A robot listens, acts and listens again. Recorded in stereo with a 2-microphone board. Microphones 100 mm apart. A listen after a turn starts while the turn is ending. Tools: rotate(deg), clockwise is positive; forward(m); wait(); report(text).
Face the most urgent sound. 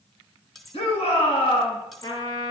rotate(-70)
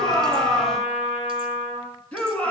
rotate(-15)
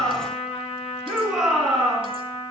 report("Found it: a shout, straight ahead.")